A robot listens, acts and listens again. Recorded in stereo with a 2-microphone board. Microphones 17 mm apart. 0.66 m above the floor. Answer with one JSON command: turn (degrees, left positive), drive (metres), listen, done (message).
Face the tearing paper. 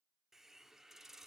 {"listen": true}
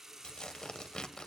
{"turn": 65}
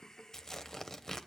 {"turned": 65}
{"turn": 35}
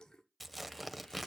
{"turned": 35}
{"done": "Found it: tearing paper, straight ahead, under 1 m away."}